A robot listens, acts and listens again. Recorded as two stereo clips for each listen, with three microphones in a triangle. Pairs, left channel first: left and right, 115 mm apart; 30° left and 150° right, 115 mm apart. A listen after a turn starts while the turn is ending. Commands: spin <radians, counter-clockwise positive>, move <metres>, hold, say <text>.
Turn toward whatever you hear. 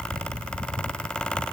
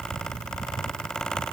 hold
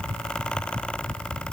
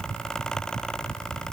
hold
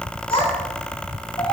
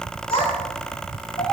spin 0.96
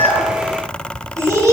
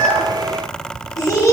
spin -0.52
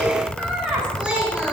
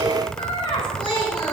spin -0.17
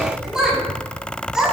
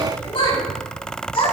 say Found it: a child speaking, straight ahead.